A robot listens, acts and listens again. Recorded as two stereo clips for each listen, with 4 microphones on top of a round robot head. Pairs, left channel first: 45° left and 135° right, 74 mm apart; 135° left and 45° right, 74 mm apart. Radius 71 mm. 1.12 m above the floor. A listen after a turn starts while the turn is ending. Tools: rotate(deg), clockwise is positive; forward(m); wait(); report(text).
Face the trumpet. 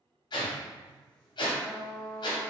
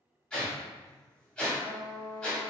rotate(30)
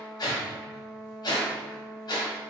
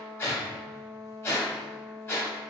rotate(10)
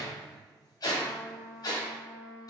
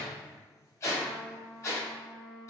report("Found it: a trumpet, straight ahead, 1 to 2 m away.")